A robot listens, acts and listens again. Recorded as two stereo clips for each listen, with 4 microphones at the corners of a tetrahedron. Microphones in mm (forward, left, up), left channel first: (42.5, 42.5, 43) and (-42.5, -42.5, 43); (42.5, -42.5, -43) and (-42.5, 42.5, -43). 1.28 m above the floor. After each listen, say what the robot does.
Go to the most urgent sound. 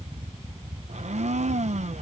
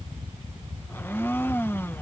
Keep listening.
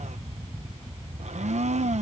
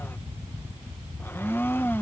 Keep listening.
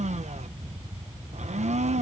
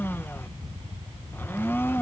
I can't make out anything urgent to turn to.